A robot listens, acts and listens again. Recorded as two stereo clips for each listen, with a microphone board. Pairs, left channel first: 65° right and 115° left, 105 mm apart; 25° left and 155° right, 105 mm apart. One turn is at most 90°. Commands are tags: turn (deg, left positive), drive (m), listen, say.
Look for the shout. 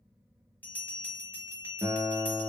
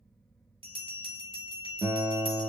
<listen/>
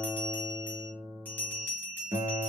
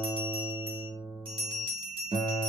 <listen/>
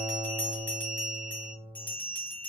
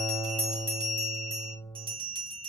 <say>I can't make out a shout, only a guitar and a bell.</say>